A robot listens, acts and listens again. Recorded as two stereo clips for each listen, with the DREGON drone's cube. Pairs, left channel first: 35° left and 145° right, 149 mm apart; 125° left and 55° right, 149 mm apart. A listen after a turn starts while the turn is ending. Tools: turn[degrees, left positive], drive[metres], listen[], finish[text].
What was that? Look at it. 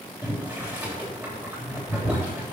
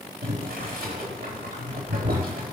Thought: The boiling: 65° right.
Action: turn[-65]
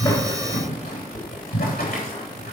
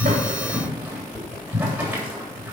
Thought: The boiling is now 25° left.
Action: turn[25]
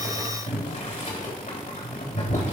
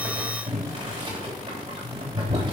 Action: finish[Facing the boiling, 2 to 4 m away.]